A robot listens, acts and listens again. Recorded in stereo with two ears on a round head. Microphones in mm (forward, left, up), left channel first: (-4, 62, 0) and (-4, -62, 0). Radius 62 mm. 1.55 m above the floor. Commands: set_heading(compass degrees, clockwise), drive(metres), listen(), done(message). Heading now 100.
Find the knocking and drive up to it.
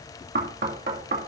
set_heading(175)
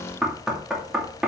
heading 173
drive(1.0)
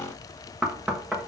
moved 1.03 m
drive(1.0)
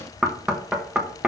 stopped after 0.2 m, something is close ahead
done("Arrived at the knocking, straight ahead.")